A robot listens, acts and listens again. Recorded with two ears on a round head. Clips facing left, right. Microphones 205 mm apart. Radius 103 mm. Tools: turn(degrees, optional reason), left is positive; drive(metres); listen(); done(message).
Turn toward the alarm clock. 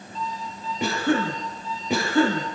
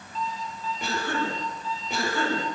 turn(degrees=-65, reason="The alarm clock: about 65° right or 115° right.")
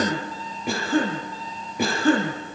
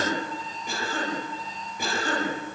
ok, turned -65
done("Found it: an alarm clock, straight ahead.")